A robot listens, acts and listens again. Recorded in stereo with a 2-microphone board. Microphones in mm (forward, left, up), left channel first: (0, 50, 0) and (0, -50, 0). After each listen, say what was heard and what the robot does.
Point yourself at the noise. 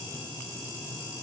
Keep listening.
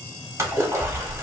The splash: about 30° right or 150° right. Turn 30° right.
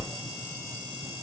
So it is at 125° right. Turn 125° right.
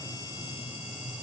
Facing where the splash came from. I can't hear it now.